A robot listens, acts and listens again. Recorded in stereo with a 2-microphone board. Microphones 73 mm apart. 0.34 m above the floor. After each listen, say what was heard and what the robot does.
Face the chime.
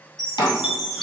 Turn 30° left.
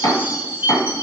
So it is at 30° right. Turn 30° right.
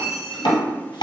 Found it: a chime, straight ahead, 1 to 2 m away.